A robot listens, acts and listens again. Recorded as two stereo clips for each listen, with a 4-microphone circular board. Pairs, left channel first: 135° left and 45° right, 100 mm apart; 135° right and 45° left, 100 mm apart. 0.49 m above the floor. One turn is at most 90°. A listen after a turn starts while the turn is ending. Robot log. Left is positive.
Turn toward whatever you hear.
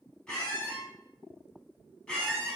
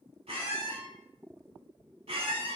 note: The squeak: 50° left.
cmd yaw +50
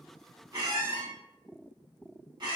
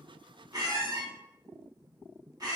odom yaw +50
end: Found it: a squeak, straight ahead, 1 to 2 m away.